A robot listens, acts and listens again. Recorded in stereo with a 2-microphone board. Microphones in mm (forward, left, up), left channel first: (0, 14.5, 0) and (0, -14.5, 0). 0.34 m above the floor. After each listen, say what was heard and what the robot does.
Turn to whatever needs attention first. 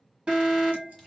The alarm: about 40° right or 140° right. Turn 40° right.
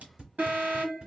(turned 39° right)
So it is at 100° right. Turn 100° right.
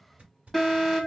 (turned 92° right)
The alarm is now 10° right. Turn 10° right.
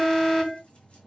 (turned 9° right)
Found it: an alarm, straight ahead, 2 to 4 m away.